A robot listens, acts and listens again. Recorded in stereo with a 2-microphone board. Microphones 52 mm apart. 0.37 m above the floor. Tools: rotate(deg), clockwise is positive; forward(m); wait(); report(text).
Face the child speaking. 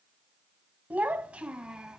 rotate(30)
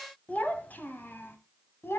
rotate(-50)
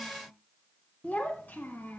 rotate(-35)
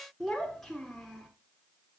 report("Found it: a child speaking, straight ahead, 2 to 4 m away.")